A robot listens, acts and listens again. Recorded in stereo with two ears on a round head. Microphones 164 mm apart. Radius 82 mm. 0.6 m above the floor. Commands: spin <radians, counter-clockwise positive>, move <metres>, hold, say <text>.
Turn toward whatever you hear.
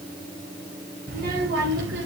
spin -1.22
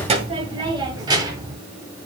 spin -0.35
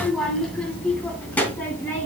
spin 0.17
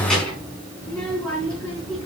say Found it: a child speaking, straight ahead, over 4 m away.